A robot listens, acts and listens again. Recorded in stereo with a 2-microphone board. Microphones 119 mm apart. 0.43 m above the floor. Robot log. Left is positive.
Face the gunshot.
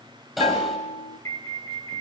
cmd yaw -30
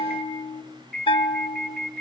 cmd idle
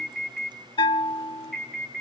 end: I heard a gunshot, but can't make it out now. It was about 25° left or 145° right.